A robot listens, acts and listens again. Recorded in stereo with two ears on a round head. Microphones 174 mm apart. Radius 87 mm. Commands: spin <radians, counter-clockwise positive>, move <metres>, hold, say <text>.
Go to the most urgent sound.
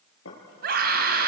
spin -0.96
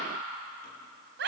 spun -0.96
spin -1.13
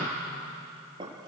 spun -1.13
hold
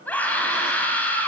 spin 0.17
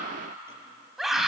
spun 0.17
move 1.0
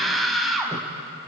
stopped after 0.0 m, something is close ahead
say Something is in my way. I am facing the scream but have not reached it.